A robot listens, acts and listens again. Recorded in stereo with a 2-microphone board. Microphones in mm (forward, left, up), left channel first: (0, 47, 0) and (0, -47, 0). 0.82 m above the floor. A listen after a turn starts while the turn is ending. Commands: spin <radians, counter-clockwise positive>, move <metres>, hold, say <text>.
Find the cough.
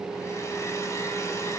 hold
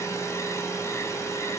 hold
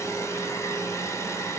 say I can't make out a cough to turn to.